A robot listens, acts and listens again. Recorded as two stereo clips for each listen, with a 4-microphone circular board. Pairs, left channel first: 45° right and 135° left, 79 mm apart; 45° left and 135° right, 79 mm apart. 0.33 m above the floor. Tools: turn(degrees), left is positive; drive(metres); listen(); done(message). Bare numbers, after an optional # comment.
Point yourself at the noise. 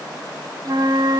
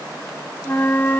# The flute: 110° left.
turn(110)
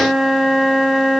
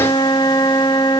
# The flute is now 50° left.
turn(50)
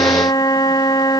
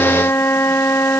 # The flute is now 15° right.
turn(-15)
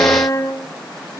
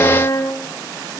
done("Facing the flute, under 1 m away.")